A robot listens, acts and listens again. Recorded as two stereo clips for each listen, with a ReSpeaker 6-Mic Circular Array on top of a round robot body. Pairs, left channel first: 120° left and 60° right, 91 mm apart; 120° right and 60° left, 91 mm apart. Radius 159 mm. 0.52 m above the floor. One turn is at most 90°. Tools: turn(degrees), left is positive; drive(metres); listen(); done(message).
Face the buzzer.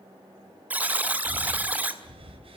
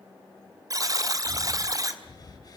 turn(degrees=10)
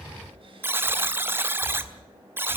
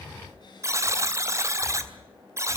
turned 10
done("Facing the buzzer, 1 to 2 m away.")